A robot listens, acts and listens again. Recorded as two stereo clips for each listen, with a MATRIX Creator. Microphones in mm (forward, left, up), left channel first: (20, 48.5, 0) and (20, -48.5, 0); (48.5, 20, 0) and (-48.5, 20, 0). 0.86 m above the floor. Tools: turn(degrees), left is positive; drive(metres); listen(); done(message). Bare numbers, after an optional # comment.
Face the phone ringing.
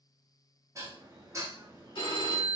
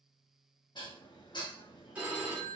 # The phone ringing: 105° left.
turn(105)
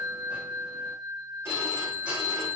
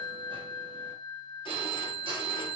# The phone ringing is now 30° right.
turn(-30)
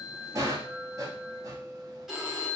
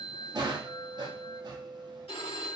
done("Found it: a phone ringing, straight ahead.")